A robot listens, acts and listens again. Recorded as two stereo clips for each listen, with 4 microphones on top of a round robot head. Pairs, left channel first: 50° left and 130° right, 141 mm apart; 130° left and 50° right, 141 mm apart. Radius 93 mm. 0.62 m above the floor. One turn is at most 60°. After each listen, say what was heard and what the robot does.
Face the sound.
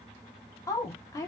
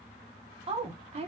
The woman speaking: 15° right. Turn 15° right.
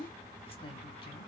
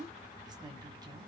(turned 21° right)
Found it: a woman speaking, straight ahead, 1 to 2 m away.